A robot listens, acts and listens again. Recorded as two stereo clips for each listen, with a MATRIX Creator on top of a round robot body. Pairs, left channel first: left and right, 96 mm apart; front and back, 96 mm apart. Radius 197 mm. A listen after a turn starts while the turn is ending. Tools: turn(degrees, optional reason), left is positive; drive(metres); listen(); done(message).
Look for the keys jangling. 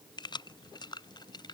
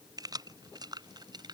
turn(degrees=135, reason="The keys jangling: 135° left.")
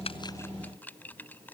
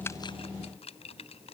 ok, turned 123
turn(degrees=15, reason="The keys jangling is now 15° left.")
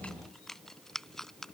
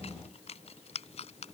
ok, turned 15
done("Facing the keys jangling.")